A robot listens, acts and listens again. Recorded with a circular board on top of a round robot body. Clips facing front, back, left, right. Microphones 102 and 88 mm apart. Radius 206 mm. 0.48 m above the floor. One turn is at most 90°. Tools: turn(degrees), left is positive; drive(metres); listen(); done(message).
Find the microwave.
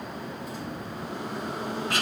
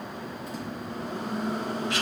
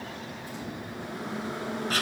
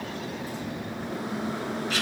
turn(degrees=-90)
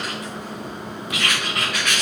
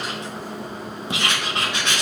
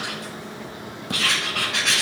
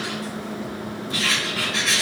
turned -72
turn(degrees=-90)
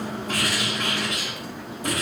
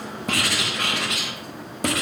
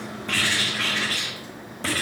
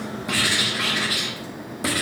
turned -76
turn(degrees=-20)
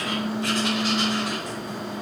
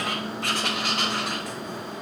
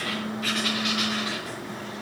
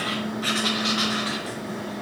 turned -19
done("Found it: a microwave, straight ahead, 2 to 4 m away.")